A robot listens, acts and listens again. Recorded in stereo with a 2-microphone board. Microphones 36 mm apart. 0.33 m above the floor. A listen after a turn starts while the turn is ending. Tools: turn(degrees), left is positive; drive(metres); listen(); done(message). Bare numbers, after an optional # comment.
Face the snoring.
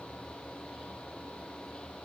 listen()
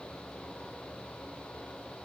listen()
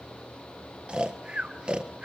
# The snoring: about 30° right or 150° right.
turn(-30)
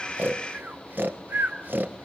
# So it is at 120° right.
turn(-120)
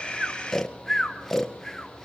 # The snoring is now 10° left.
turn(10)
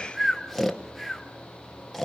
done("Found it: snoring, straight ahead, 1 to 2 m away.")